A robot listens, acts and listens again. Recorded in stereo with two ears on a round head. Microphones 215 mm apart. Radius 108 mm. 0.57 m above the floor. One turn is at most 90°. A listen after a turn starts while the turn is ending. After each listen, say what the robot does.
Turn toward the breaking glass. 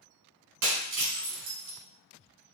Turn 55° right.
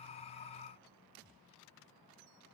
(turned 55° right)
Keep listening.
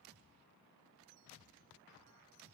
I heard breaking glass, but can't make it out now. It was about straight ahead or 70° right.